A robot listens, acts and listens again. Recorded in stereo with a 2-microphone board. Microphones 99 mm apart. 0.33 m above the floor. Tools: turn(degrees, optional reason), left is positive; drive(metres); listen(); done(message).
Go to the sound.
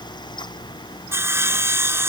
turn(degrees=-25, reason="The sawing: about 25° right or 155° right.")
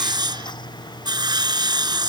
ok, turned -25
turn(degrees=-130, reason="So it is at 130° right.")
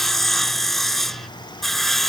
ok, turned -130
drive(metres=1.0)
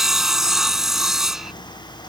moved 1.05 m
drive(metres=1.0)
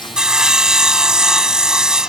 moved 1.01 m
turn(degrees=-10, reason="The sawing is now 10° right.")
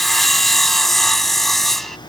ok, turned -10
drive(metres=1.0)
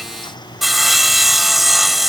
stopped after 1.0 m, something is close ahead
done("I am next to the sawing.")